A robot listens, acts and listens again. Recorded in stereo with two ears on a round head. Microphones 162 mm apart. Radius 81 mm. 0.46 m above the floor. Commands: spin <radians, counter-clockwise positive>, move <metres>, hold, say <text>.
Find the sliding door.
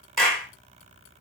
hold
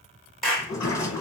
spin 0.35
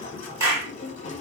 spin 2.44
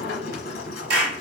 spin 0.96
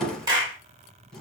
say Facing the sliding door, 1 to 2 m away.